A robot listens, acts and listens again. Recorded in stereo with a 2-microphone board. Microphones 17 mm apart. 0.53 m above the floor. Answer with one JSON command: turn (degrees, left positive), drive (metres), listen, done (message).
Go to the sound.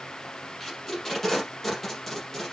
{"turn": 30}
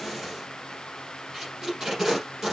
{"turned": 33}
{"turn": -25}
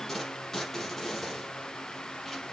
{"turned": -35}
{"turn": 15}
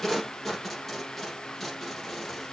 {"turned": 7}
{"drive": 1.0}
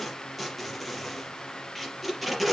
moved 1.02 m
{"drive": 1.0}
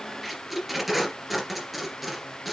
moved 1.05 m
{"drive": 1.0}
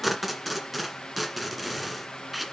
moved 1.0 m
{"drive": 1.0}
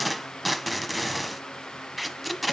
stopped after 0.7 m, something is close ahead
{"done": "Arrived at the tape being pulled, straight ahead."}